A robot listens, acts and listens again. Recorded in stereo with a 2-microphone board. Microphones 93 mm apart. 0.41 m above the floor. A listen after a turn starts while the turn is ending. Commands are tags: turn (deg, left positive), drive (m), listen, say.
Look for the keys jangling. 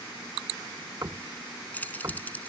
<turn deg="15"/>
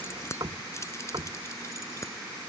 <turn deg="30"/>
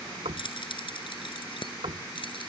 <turn deg="120"/>
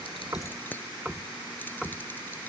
<turn deg="20"/>
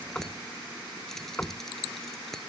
<listen/>
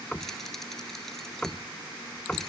<listen/>
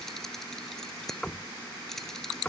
<say>Facing the keys jangling.</say>